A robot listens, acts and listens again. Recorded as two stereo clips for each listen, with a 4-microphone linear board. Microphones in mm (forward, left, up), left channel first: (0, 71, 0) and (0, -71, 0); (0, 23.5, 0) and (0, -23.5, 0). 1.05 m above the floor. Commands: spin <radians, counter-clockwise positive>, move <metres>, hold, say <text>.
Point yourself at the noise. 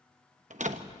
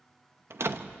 spin -1.13
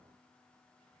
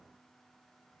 hold
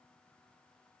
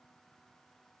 say I heard a door slam, but can't make it out now. It was about straight ahead or 50° right.